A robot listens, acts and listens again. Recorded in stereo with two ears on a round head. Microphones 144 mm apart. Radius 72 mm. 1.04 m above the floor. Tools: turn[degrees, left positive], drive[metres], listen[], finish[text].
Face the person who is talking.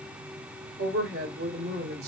Thought: The woman speaking: about 70° right or 110° right.
Action: turn[-70]
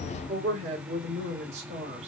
Thought: So it is at 40° right.
Action: turn[-40]
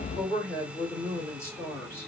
Thought: The woman speaking is now 15° left.
Action: turn[15]
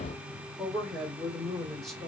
Action: finish[Facing the woman speaking, 2 to 4 m away.]